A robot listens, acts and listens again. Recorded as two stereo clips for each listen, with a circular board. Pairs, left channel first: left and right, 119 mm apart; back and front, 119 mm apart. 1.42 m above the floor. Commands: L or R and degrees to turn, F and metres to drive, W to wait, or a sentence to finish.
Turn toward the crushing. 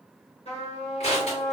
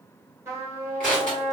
L100
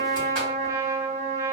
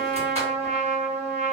W
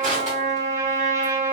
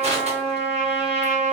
W
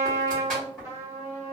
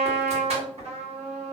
Found it: crushing, straight ahead.